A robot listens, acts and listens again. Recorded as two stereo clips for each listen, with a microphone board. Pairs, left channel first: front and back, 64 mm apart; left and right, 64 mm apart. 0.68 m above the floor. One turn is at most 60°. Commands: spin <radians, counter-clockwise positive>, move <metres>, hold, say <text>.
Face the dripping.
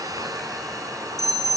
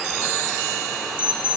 hold
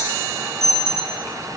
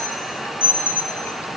hold
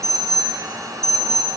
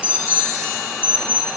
say I can't make out dripping, only an alarm.